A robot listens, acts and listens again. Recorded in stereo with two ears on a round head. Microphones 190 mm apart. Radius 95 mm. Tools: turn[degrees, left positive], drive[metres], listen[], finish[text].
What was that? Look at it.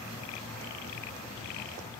Action: listen[]
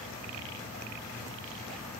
Action: listen[]
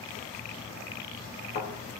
Thought: The thud: about 55° left or 125° left.
Action: turn[55]
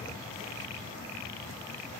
Action: listen[]
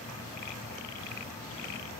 Action: finish[I heard a thud, but can't make it out now. It was about straight ahead or 70° left.]